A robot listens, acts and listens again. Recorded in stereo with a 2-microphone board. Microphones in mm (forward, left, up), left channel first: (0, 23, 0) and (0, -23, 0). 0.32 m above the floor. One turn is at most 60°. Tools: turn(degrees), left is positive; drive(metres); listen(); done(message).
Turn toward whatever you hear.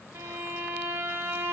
turn(degrees=-60)
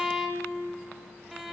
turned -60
done("Found it: a violin, straight ahead, under 1 m away.")